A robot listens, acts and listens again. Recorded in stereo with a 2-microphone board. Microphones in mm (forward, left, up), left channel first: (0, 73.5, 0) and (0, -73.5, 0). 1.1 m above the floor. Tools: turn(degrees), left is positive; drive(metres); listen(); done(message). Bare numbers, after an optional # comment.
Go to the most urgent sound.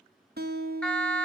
turn(30)
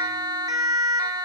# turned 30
# So it is at 25° right.
turn(-25)
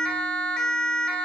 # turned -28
drive(1.0)
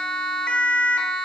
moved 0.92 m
drive(1.0)
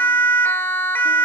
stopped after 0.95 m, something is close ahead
# The siren is now 15° left.
turn(15)
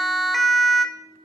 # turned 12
done("I am next to the siren.")